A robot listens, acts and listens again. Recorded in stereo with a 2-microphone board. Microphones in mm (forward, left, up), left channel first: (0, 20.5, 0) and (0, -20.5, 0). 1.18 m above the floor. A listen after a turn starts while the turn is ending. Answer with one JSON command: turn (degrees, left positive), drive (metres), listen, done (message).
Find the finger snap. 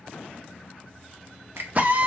{"turn": -75}
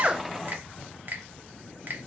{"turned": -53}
{"turn": -50}
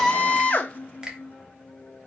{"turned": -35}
{"turn": -15}
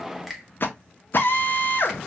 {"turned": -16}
{"done": "Facing the finger snap."}